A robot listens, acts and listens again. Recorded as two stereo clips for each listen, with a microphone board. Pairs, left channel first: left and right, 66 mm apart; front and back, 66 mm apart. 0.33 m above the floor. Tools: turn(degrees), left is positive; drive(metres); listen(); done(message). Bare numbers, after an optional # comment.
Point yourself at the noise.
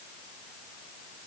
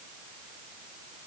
listen()
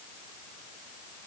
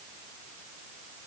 listen()
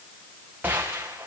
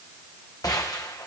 # The gunshot: 30° right.
turn(-30)
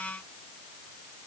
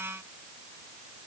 done("Facing where the gunshot came from. I can't hear it now.")